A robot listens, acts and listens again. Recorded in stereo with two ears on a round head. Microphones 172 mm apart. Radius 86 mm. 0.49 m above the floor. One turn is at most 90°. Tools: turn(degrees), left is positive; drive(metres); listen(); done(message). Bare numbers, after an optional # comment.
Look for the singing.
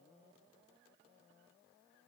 listen()
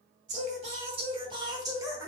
turn(-30)
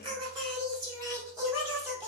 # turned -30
turn(-30)
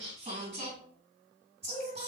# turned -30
# So it is at 145° right.
turn(-90)
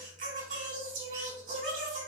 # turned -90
# The singing is now 45° right.
turn(-45)
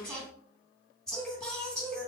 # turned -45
done("Found it: singing, straight ahead, 2 to 4 m away.")